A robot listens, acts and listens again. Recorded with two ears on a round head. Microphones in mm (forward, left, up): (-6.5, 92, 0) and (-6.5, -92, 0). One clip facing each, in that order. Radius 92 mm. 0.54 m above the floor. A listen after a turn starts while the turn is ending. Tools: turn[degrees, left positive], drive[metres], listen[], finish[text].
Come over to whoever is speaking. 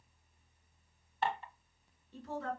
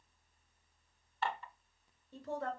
Thought: The woman speaking: about 75° right or 105° right.
Action: turn[-75]
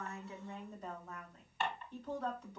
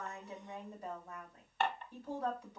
Thought: So it is at 10° right.
Action: turn[-10]
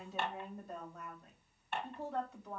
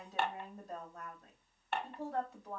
Action: drive[1.0]
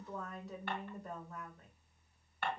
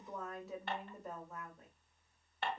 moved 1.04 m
Action: drive[1.0]
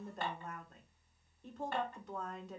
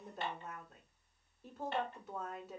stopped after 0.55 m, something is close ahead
Action: finish[Arrived at the woman speaking, straight ahead.]